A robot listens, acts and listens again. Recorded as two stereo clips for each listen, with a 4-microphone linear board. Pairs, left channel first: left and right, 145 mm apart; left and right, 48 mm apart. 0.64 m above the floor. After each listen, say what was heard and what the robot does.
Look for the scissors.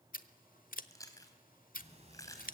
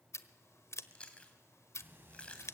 Turn 90° left.
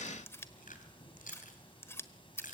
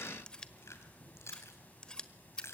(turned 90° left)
So it is at 15° left. Turn 15° left.
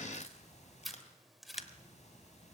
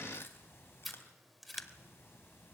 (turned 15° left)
Found it: scissors, straight ahead.